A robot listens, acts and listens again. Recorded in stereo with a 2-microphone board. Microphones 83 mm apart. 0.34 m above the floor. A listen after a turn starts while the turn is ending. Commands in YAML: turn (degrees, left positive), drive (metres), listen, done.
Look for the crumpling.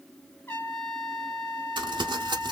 turn: -60
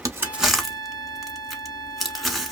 done: "Found it: crumpling, straight ahead."